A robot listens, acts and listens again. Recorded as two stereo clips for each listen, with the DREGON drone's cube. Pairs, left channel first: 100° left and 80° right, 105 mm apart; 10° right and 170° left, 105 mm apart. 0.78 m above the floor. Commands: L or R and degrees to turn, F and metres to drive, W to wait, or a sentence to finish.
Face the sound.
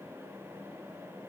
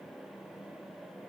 W
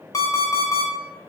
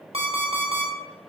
L155
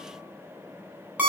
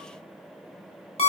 Facing the alarm clock.